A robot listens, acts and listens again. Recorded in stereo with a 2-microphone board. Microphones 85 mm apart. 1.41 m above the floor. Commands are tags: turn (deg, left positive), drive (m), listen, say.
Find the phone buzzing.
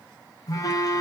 <turn deg="45"/>
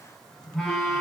<say>Facing the phone buzzing, under 1 m away.</say>